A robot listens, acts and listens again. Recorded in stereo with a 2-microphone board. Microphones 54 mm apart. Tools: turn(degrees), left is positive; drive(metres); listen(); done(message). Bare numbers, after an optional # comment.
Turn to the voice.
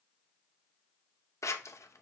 listen()
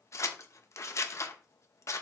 listen()
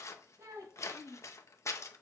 turn(-90)
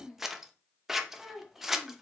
done("Found it: a child speaking, straight ahead, 2 to 4 m away.")